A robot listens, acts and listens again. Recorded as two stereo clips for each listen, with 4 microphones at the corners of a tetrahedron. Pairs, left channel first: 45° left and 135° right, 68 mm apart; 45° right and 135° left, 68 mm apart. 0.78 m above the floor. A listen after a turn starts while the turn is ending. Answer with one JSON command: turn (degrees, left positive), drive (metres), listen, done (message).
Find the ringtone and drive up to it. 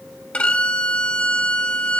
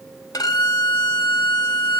{"listen": true}
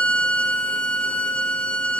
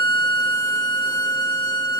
{"listen": true}
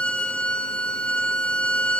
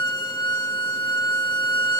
{"done": "I can't make out a ringtone to turn to."}